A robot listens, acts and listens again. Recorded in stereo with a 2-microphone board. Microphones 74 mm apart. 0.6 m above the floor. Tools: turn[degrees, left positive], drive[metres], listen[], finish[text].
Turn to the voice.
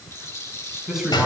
Action: turn[-30]
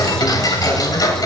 Action: listen[]
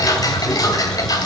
Action: listen[]
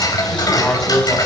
Thought: So it is at 20° left.
Action: turn[20]
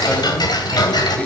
Action: listen[]
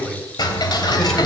Action: finish[Facing the man speaking.]